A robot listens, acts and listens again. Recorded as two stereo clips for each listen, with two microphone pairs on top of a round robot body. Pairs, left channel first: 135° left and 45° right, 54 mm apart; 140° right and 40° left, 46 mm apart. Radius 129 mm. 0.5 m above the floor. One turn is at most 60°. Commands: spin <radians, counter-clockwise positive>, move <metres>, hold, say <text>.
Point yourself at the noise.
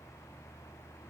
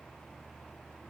hold
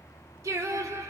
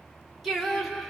spin -1.05
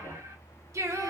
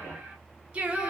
spin -0.61
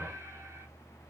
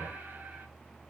hold
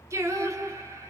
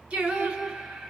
spin -0.79
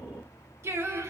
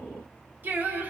spin -0.26
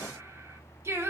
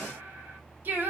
spin -0.17
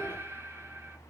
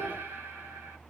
say Facing the singing, 1 to 2 m away.